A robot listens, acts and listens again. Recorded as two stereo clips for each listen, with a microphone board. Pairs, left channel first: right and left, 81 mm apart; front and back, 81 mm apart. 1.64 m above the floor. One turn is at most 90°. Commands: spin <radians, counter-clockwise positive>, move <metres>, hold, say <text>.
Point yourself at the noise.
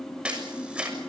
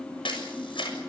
spin 0.26
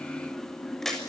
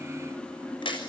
say Found it: a camera shutter, straight ahead, over 4 m away.